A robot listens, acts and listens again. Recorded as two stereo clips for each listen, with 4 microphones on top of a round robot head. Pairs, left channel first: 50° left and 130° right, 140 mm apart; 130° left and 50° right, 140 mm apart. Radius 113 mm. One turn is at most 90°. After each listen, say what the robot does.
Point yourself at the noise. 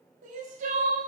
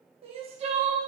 Turn 90° right.
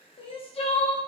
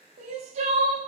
Facing the crying.